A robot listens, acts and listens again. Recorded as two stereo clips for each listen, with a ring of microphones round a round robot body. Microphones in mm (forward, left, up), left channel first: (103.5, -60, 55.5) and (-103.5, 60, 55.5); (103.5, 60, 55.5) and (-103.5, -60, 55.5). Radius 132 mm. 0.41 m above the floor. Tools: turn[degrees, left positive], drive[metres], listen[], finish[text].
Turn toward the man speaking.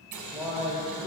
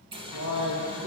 Thought: The man speaking: 120° right.
Action: turn[-120]
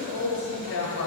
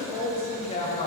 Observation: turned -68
Thought: The man speaking is now 25° right.
Action: turn[-25]
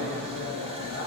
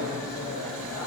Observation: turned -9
Action: finish[Found it: a man speaking, straight ahead, 2 to 4 m away.]